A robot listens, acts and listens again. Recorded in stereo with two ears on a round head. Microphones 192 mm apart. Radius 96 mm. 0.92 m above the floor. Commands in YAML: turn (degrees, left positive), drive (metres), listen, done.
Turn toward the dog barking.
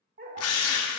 turn: -45
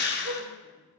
turn: -90
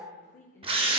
turn: -10
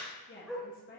done: "Facing the dog barking."